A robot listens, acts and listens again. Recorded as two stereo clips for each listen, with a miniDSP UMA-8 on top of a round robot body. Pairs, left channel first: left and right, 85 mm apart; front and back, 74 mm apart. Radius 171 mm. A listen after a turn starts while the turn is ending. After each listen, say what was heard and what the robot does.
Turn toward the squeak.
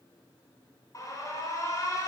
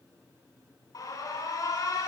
Keep listening.
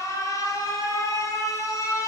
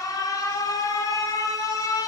Keep listening.
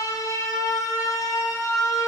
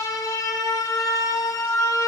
I can't make out a squeak, only an alarm.